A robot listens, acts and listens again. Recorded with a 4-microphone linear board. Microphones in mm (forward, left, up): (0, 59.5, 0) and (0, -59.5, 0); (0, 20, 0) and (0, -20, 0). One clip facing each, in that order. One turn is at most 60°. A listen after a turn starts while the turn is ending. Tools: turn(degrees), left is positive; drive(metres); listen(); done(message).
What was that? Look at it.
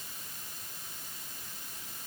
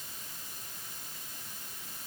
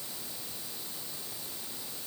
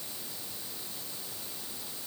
listen()
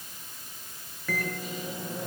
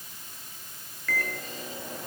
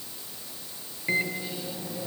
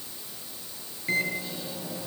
turn(degrees=30)
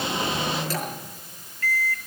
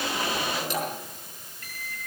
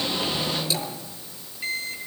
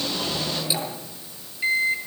turn(degrees=-20)
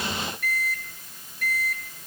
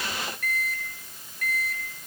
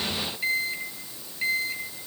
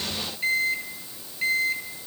done("Found it: a microwave, straight ahead, over 4 m away.")